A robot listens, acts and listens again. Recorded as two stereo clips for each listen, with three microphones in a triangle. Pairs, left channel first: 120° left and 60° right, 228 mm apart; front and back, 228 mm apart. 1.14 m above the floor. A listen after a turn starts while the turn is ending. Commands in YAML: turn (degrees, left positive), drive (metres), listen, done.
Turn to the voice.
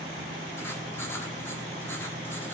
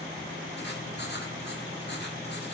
listen: true
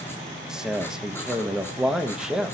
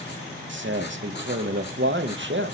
turn: -145
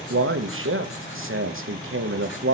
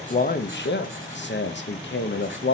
turn: -35
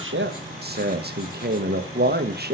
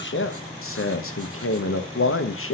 turn: -15
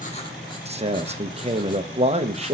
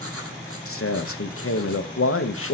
done: "Facing the man speaking, 1 to 2 m away."